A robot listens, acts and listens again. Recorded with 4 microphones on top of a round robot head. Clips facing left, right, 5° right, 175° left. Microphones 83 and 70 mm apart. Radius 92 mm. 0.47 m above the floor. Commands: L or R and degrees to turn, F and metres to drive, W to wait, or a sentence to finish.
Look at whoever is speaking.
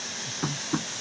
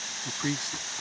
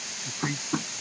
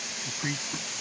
R95
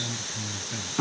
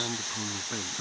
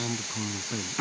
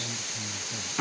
R30
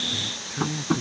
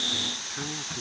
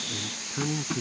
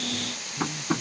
Facing the man speaking.